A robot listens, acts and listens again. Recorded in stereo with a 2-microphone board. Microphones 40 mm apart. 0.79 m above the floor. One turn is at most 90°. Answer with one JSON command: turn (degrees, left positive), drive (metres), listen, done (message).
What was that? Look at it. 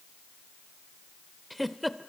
{"turn": 30}
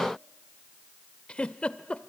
{"turn": 90}
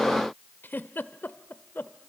{"turn": 60}
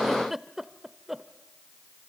{"turn": -10}
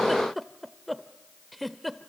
{"done": "Facing the giggle."}